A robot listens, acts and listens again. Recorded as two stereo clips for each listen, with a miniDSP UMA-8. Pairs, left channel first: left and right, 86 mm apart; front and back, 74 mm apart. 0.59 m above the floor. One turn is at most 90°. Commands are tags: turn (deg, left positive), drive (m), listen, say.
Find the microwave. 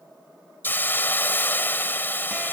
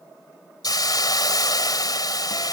<listen/>
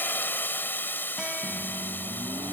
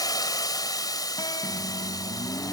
<turn deg="-65"/>
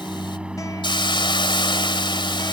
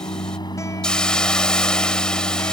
<turn deg="-10"/>
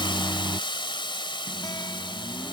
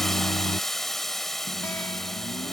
<say>Facing the microwave.</say>